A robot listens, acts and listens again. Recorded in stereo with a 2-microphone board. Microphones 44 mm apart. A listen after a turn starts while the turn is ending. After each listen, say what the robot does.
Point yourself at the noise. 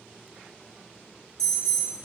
Turn 30° left.
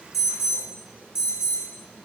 Turn 15° right.
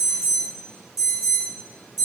Facing the alarm, 2 to 4 m away.